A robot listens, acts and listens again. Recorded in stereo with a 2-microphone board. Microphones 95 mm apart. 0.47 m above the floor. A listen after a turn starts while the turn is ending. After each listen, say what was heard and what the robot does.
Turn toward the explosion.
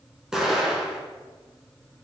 Turn 30° right.
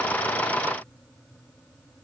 Keep listening.
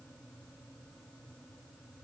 I heard an explosion, but can't make it out now. It was about 25° left or 145° right.